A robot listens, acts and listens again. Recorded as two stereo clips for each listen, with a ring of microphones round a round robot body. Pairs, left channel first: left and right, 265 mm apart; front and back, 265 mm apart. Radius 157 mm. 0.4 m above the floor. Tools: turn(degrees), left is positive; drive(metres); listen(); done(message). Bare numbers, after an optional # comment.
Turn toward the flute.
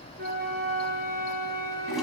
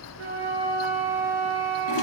# The flute: 145° right.
turn(-145)
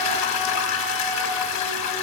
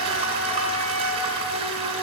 listen()
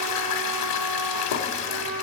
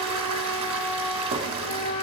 # The flute is now 35° right.
turn(-35)
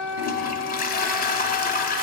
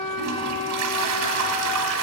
done("Facing the flute, 2 to 4 m away.")